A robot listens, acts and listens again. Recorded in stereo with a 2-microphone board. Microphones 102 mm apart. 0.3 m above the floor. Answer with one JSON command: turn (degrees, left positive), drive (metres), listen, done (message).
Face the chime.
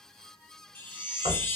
{"turn": 20}
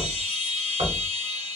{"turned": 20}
{"done": "Facing the chime, 1 to 2 m away."}